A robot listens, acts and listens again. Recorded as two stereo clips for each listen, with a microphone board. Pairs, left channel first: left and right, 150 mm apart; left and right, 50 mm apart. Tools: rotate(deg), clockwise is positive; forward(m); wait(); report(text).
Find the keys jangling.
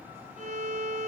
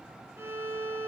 wait()
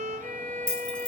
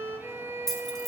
rotate(-30)
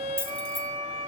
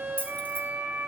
rotate(-145)
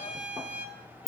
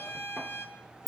report("Found it: keys jangling, straight ahead.")